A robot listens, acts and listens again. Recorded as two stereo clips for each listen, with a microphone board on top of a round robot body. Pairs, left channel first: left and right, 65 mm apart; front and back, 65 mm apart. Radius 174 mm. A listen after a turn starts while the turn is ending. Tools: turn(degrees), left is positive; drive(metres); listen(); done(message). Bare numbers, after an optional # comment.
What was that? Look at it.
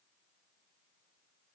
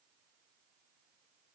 listen()
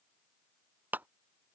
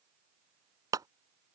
# The clap: 155° right.
turn(-155)
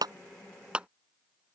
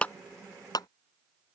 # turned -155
# The clap is now 15° right.
turn(-15)
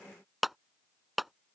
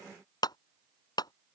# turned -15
done("Facing the clap.")